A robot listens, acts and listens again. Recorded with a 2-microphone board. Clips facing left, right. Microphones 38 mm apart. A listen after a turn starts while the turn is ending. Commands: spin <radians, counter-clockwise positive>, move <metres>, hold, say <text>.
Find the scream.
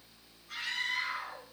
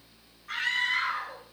spin -1.13
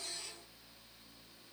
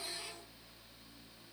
hold
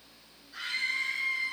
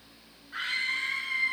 spin -0.79
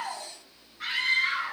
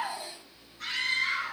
spin 0.35
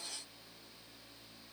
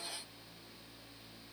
hold
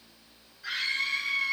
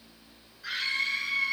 say Facing the scream, over 4 m away.